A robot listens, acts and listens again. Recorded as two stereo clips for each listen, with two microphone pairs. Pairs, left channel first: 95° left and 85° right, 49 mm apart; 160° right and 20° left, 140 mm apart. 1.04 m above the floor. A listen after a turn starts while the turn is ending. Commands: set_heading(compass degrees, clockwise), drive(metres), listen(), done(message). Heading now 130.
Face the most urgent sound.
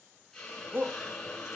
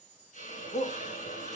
set_heading(260)
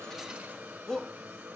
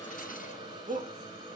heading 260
set_heading(240)
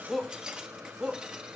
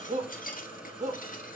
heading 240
done("Found it: a shout, straight ahead.")